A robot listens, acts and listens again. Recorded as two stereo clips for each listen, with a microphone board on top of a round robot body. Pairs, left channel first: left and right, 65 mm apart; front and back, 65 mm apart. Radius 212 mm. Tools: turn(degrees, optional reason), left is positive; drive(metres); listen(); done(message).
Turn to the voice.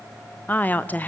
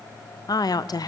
turn(degrees=25, reason="The woman speaking: 25° left.")
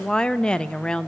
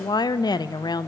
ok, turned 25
turn(degrees=10, reason="The woman speaking is now 10° left.")
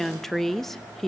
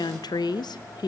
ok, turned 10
done("Found it: a woman speaking, straight ahead.")